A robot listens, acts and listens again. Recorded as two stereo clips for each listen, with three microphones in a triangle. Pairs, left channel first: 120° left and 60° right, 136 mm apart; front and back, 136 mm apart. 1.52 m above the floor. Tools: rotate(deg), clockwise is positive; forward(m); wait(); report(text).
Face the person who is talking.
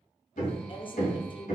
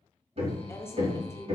rotate(-70)
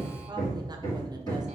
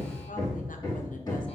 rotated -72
wait()
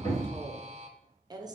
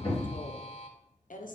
report("Found it: a woman speaking, straight ahead.")